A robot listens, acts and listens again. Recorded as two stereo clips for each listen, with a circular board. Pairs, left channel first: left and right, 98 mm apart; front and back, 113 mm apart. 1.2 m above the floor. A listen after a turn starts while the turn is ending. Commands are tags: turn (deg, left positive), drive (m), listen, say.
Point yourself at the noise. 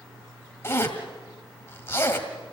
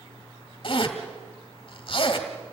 <turn deg="30"/>
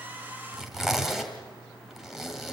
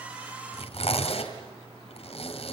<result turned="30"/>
<say>Facing the zipper.</say>